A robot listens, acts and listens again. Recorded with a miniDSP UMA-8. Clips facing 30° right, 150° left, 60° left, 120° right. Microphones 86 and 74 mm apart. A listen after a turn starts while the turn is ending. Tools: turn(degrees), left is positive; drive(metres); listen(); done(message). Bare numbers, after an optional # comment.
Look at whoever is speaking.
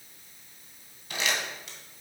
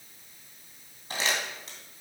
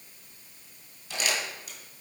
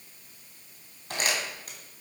listen()
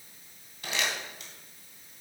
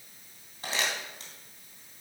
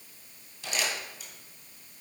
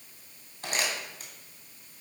listen()
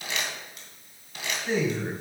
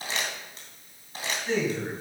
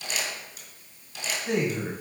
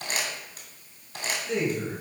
# The man speaking: 50° left.
turn(50)
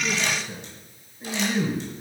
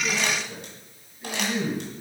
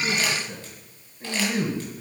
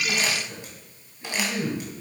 # The man speaking is now 15° left.
turn(15)
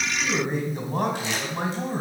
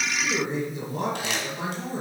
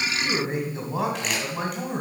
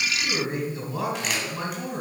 done("Found it: a man speaking, straight ahead, 2 to 4 m away.")